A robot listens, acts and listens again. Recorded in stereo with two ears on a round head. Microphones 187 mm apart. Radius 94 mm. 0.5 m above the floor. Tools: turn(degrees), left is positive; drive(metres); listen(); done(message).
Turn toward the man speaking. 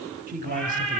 turn(degrees=-40)
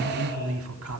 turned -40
turn(degrees=-105)
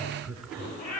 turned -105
done("Facing the man speaking, 2 to 4 m away.")